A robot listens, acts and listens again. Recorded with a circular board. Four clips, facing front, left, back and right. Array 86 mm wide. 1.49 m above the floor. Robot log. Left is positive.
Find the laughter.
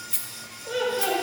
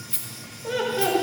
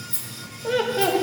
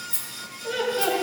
note: The laughter: 170° left.
cmd yaw +170
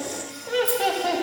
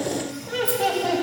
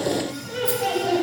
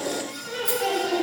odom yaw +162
note: The laughter is now 20° left.
cmd yaw +20
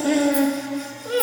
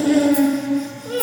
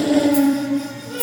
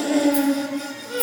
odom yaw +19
end: Facing the laughter.